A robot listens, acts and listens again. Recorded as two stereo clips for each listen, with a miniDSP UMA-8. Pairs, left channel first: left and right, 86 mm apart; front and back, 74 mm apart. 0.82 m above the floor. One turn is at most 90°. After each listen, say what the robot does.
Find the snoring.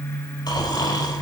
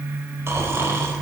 Turn 90° left.
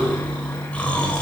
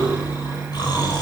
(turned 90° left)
Turn 15° left.
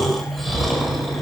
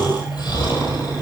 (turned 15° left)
Found it: snoring, straight ahead.